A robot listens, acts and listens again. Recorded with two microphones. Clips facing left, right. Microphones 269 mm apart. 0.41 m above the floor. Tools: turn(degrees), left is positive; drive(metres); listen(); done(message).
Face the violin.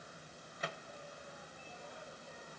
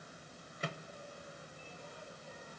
listen()
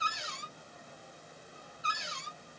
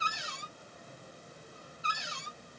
listen()
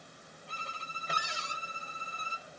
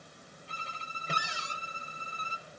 turn(degrees=55)
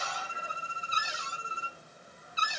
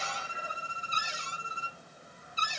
turn(degrees=45)
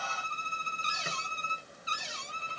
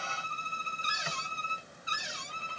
turn(degrees=20)
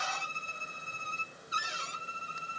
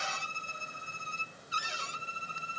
done("Facing the violin.")